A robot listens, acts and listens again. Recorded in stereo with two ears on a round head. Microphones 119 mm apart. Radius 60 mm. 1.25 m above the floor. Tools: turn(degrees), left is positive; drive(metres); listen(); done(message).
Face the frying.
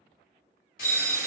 turn(degrees=60)
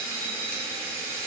turn(degrees=10)
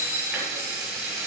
done("Found it: frying, straight ahead, 1 to 2 m away.")